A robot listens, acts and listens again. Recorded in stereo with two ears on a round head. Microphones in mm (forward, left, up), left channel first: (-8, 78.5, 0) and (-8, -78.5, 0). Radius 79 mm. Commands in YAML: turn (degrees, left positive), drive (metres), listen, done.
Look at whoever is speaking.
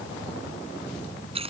listen: true
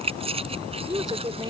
turn: -20
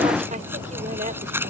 listen: true
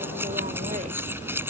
listen: true
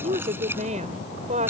turn: -135
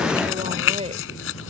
turn: -35
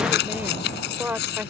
turn: -10
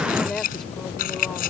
done: "Found it: a woman speaking, straight ahead."